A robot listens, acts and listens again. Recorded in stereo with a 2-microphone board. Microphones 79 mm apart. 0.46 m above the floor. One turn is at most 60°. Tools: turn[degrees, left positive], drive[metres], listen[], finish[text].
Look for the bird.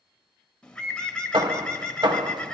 Action: turn[30]
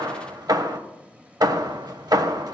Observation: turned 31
Action: listen[]
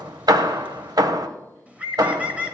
Thought: So it is at 20° right.
Action: turn[-20]
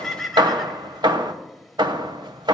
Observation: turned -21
Action: finish[Found it: a bird, straight ahead, under 1 m away.]